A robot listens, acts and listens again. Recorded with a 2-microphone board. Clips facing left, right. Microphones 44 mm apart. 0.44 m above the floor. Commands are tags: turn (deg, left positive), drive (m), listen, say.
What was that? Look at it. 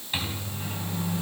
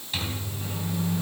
<turn deg="20"/>
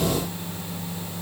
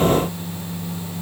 <say>Found it: a microwave, straight ahead.</say>